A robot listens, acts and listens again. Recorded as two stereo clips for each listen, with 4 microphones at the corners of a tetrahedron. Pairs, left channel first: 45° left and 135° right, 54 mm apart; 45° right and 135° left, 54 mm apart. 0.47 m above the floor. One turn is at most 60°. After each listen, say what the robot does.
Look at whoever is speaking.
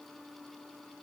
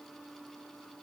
Keep listening.
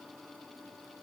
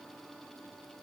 Keep listening.
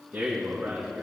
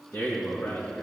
Turn 60° right.
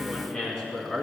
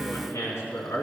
Turn 20° right.
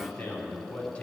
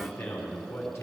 Found it: a man speaking, straight ahead, 2 to 4 m away.